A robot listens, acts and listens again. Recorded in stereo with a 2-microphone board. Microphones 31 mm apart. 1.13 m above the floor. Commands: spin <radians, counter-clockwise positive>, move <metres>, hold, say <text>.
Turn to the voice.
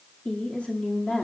spin 0.70
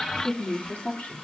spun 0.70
spin 1.75
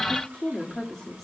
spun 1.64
say Facing the woman speaking.